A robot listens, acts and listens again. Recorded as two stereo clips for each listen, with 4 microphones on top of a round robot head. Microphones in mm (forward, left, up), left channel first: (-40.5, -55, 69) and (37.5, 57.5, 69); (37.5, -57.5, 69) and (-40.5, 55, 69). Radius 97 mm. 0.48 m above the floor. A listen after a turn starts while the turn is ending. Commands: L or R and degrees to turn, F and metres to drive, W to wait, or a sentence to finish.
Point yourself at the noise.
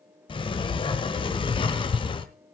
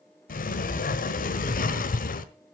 R70
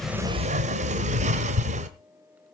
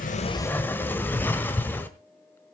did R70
L20
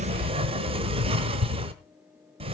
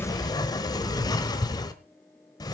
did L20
Found it: a sliding door, straight ahead, 1 to 2 m away.